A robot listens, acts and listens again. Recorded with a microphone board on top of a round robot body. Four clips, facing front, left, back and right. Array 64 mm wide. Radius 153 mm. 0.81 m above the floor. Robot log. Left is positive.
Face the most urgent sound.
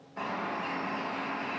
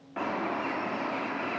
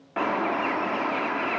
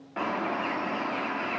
cmd idle
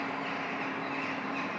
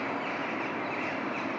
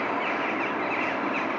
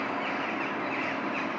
cmd idle
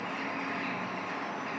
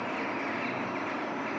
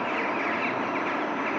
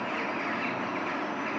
end: I can't make out anything urgent to turn to.